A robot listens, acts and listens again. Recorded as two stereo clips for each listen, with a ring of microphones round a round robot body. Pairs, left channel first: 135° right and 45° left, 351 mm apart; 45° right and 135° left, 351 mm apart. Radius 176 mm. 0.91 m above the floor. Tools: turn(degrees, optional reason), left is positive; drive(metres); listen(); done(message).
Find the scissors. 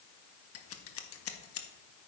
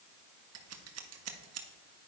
turn(degrees=180, reason="The scissors: straight behind.")
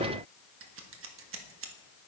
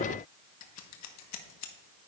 done("Found it: scissors, straight ahead.")